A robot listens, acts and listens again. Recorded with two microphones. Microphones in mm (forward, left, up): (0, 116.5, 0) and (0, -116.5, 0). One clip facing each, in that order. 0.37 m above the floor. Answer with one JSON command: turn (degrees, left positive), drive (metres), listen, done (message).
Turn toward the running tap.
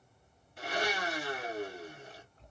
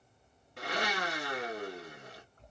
{"turn": -55}
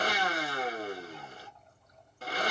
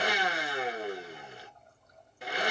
{"turn": -60}
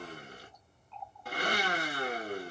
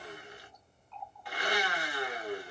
{"done": "Facing the running tap."}